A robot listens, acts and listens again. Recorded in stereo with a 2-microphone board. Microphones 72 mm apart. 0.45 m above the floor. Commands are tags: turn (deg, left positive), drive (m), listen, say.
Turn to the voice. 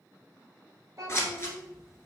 <turn deg="-50"/>
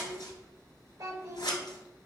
<turn deg="-65"/>
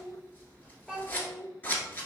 <say>Found it: a child speaking, straight ahead, 1 to 2 m away.</say>